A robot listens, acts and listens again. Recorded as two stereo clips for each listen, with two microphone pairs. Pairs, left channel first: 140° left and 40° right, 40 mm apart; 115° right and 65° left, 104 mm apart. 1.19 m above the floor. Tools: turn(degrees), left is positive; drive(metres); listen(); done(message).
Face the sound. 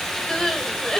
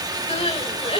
turn(degrees=-145)
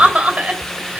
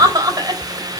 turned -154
turn(degrees=10)
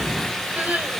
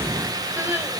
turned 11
done("Facing the crying.")